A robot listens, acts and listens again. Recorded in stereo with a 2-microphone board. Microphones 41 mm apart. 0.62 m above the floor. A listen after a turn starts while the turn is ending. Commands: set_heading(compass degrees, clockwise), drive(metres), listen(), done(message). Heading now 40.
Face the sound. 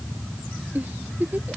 set_heading(85)
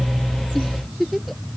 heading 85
done("Facing the giggle.")